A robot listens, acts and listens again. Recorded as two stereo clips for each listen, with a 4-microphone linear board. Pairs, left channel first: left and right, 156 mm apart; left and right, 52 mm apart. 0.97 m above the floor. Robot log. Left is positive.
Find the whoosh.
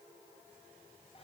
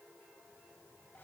cmd idle
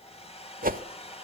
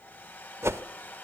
note: The whoosh: about 65° right or 115° right.
cmd yaw -65
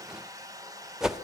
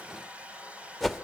end: Found it: a whoosh, straight ahead, under 1 m away.